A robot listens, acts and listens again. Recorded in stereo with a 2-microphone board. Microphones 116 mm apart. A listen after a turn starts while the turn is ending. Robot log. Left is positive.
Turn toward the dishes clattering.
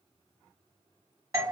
cmd idle
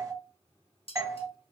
note: The dishes clattering: about 55° left or 125° left.
cmd yaw +55
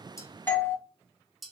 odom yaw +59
end: Found it: dishes clattering, straight ahead, under 1 m away.